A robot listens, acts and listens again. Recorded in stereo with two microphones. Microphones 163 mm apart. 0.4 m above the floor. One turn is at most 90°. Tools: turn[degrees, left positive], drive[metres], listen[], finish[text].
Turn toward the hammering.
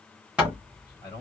Action: turn[-30]
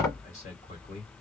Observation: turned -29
Thought: So it is at 20° left.
Action: turn[20]
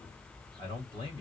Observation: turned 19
Action: listen[]
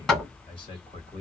Action: finish[Facing the hammering.]